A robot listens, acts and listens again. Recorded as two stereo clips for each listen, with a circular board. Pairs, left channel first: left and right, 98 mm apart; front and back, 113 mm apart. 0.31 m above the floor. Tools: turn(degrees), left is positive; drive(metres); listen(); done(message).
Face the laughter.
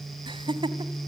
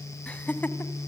turn(degrees=-70)
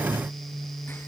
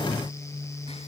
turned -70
listen()
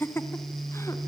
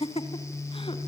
turn(degrees=25)
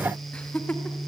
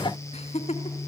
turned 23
turn(degrees=15)
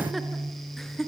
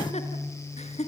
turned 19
done("Facing the laughter.")